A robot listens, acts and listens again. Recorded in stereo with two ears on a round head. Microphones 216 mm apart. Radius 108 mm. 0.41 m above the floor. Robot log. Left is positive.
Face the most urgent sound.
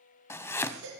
cmd yaw -90
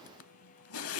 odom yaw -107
note: Nothing new. It was at 15° left.
cmd yaw +15
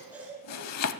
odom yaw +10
end: Found it: a baby crying, straight ahead.